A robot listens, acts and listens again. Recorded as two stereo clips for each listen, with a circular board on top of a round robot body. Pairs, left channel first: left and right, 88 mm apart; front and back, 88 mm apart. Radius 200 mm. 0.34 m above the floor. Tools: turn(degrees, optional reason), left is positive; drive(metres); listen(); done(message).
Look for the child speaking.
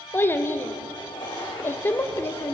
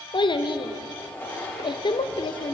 turn(degrees=25, reason="The child speaking: 25° left.")
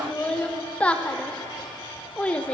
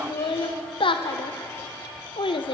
turn(degrees=15, reason="The child speaking is now 15° left.")
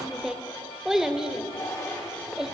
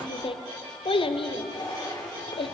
done("Facing the child speaking, under 1 m away.")